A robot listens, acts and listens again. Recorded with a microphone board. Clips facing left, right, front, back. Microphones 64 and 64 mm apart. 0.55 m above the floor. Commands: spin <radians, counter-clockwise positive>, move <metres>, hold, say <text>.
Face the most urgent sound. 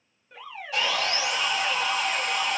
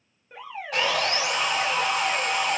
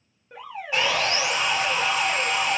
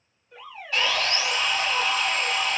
spin -0.52
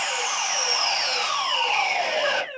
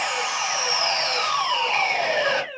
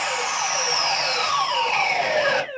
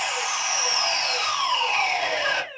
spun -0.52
say Facing the alarm.